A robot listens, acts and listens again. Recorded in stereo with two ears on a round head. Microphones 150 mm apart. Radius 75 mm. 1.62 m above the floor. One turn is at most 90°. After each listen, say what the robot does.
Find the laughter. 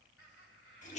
Turn 90° left.
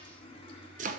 Keep listening.
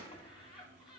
Found it: laughter, straight ahead.